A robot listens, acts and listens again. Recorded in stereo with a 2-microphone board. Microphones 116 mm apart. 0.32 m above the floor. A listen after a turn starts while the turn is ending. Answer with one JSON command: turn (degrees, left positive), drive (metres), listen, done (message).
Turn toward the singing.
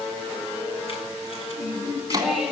{"turn": 30}
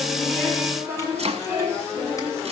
{"turn": -25}
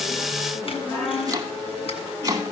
{"done": "Facing the singing, 2 to 4 m away."}